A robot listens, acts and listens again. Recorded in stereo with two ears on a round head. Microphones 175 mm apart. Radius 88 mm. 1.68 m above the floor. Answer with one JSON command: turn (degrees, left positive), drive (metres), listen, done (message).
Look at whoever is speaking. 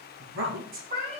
{"turn": -90}
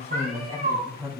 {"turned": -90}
{"turn": -15}
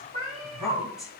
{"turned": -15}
{"done": "Found it: a woman speaking, straight ahead."}